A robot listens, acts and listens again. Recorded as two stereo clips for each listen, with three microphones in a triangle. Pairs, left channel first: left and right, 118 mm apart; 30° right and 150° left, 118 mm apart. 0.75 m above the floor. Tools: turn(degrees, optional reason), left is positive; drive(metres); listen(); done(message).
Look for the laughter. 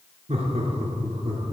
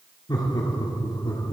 turn(degrees=-70, reason="The laughter: 70° right.")
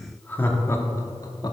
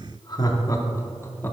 turn(degrees=40, reason="The laughter is now 40° left.")
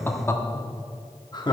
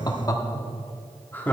turn(degrees=45, reason="The laughter is now 45° left.")
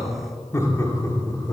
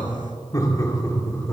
turn(degrees=30, reason="The laughter is now 30° left.")
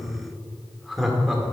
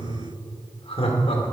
done("Found it: laughter, straight ahead, 1 to 2 m away.")